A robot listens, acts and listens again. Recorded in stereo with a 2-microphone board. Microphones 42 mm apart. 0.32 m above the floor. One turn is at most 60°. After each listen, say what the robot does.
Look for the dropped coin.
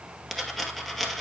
Turn 30° left.
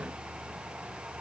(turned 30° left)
Keep listening.
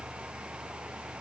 I heard a dropped coin, but can't make it out now. It was about 25° right or 145° left.